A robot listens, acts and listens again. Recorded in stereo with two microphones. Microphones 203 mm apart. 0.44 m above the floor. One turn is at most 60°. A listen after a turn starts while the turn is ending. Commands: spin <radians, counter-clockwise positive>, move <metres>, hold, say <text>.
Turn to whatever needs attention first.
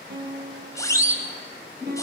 spin 0.52
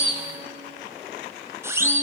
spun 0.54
spin -0.26
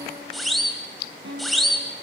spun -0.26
say Found it: a siren, straight ahead.